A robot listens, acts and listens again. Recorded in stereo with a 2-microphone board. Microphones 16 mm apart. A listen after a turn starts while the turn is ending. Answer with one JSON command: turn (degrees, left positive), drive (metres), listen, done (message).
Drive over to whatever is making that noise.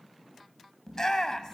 {"turn": 35}
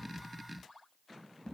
{"listen": true}
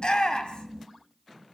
{"turn": 105}
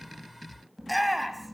{"drive": 1.0}
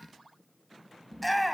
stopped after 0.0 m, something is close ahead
{"turn": 15}
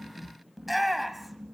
{"done": "Something is in my way. I am facing the shout but have not reached it."}